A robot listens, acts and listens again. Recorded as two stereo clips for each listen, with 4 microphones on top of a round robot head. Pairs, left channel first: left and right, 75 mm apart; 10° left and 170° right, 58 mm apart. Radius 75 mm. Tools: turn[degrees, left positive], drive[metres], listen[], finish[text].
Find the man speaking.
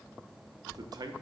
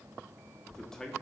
Thought: The man speaking: 70° right.
Action: turn[-70]
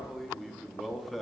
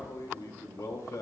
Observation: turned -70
Action: finish[Found it: a man speaking, straight ahead.]